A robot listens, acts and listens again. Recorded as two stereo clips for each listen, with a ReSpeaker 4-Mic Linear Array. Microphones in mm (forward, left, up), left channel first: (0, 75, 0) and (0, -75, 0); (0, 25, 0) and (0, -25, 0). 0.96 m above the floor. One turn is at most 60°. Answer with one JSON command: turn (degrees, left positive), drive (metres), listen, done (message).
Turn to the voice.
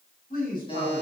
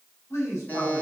{"turn": 60}
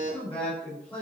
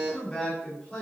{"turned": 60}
{"turn": 10}
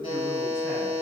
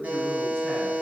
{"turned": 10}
{"listen": true}
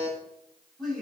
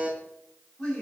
{"done": "Found it: a man speaking, straight ahead."}